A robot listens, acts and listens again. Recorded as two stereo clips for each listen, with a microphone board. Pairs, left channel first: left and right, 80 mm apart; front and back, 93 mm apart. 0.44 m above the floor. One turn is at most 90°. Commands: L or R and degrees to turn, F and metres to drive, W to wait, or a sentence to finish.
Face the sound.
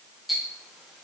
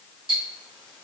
R90
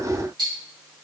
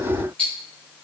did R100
R75
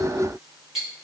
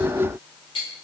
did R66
R10
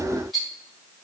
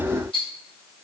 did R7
Facing the ticking, 1 to 2 m away.